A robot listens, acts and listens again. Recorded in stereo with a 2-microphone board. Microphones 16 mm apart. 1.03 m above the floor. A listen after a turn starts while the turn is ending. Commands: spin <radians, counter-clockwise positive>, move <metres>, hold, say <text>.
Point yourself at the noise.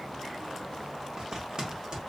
spin -0.79
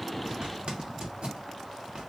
spin -1.48
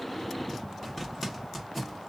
say Found it: a zipper, straight ahead, 1 to 2 m away.